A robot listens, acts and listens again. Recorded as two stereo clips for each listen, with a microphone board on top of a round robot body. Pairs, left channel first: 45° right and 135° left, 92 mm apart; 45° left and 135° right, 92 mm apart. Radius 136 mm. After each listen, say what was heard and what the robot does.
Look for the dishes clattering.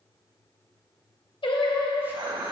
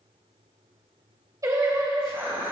The dishes clattering: 160° left. Turn 160° left.
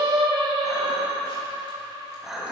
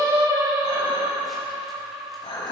The dishes clattering is now 50° left. Turn 50° left.
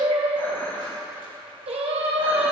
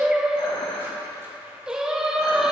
The dishes clattering is now 20° left. Turn 20° left.
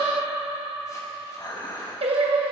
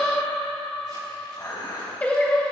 Facing the dishes clattering.